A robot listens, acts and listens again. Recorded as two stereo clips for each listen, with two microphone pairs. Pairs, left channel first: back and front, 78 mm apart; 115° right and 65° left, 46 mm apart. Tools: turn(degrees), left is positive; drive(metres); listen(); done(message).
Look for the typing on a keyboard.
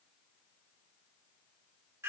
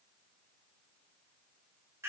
listen()
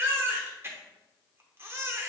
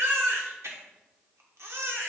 listen()
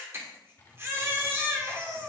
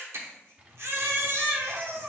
turn(degrees=120)
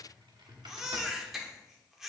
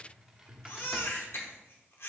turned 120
turn(degrees=-15)
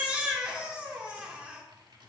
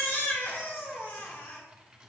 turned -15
turn(degrees=-10)
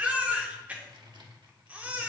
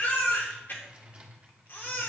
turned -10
done("Found it: typing on a keyboard, straight ahead, 1 to 2 m away.")